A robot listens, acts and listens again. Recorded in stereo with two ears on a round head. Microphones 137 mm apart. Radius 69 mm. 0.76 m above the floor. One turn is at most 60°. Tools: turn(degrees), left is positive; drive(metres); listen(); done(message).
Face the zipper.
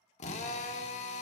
listen()
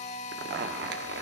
turn(degrees=-60)
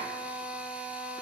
turn(degrees=-30)
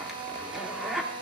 done("Facing the zipper, under 1 m away.")